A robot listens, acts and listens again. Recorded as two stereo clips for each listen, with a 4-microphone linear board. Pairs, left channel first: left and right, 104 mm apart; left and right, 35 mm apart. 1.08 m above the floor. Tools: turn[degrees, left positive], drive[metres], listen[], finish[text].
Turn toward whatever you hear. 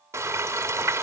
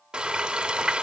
Thought: The frying: about 25° right or 155° right.
Action: turn[-25]
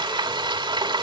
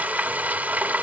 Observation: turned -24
Thought: So it is at 130° right.
Action: turn[-130]
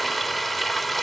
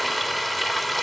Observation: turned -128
Action: finish[Facing the frying, 2 to 4 m away.]